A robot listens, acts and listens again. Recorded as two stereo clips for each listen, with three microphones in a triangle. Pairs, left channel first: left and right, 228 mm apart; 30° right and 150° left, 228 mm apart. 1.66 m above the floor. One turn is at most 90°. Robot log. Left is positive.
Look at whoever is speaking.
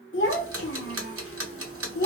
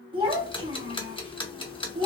note: The child speaking: 90° left.
cmd yaw +90
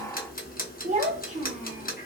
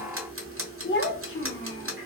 note: The child speaking is now 35° right.
cmd yaw -35
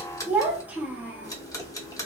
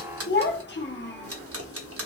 note: The child speaking is now 10° right.
cmd yaw -10
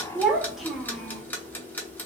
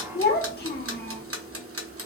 end: Facing the child speaking.